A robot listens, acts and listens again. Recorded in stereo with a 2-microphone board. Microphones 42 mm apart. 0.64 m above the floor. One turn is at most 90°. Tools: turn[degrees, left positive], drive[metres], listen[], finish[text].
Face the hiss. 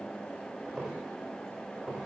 Action: listen[]
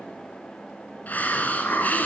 Thought: The hiss: about 45° left or 135° left.
Action: turn[45]
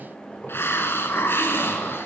Thought: So it is at 90° left.
Action: turn[90]
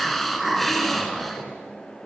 Action: finish[Facing the hiss, 1 to 2 m away.]